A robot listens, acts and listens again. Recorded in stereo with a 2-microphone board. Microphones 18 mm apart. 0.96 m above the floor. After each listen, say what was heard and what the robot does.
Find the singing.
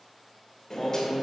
Turn 30° left.
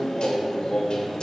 So it is at 135° left. Turn 135° left.
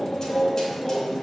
Facing the singing.